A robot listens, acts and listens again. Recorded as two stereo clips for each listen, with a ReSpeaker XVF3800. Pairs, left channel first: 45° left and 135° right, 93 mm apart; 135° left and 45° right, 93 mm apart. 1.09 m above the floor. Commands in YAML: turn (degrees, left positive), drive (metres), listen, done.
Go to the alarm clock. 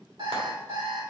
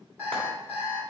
turn: -110
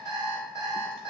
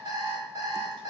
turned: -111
drive: 1.0
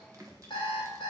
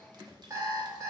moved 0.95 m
turn: 10
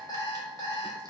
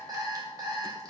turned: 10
drive: 1.0
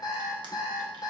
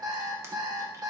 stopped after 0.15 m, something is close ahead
done: "I am next to the alarm clock."